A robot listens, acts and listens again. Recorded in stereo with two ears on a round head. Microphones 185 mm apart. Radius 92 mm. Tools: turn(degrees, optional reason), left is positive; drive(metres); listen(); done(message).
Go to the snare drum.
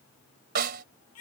turn(degrees=-50, reason="The snare drum: about 50° right or 130° right.")
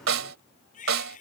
turn(degrees=-75, reason="So it is at 75° right.")
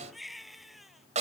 turn(degrees=-35, reason="The snare drum is now 35° right.")
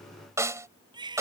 turn(degrees=-15, reason="The snare drum is now 15° right.")
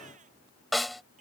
drive(metres=1.0)
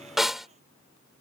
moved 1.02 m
drive(metres=1.0)
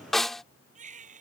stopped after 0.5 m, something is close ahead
done("I am next to the snare drum.")